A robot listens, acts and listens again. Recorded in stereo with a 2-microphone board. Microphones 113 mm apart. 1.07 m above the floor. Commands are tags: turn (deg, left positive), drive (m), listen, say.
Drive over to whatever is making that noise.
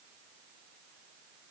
<listen/>
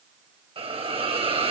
<turn deg="-60"/>
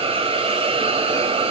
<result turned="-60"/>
<turn deg="-60"/>
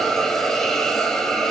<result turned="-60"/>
<drive m="1.0"/>
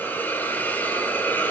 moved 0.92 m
<turn deg="20"/>
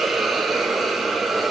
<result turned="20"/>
<drive m="1.0"/>
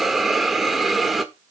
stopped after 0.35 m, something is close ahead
<say>Arrived at the hiss, straight ahead.</say>